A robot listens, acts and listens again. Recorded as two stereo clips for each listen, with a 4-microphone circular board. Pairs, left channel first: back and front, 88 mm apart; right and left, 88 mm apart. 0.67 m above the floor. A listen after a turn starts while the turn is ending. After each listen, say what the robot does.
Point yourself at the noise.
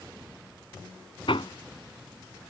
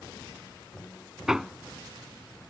Turn 175° left.
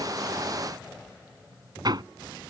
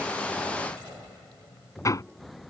Turn 40° right.
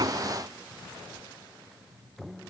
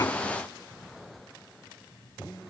Keep listening.
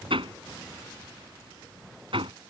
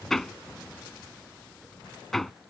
Facing the hammering.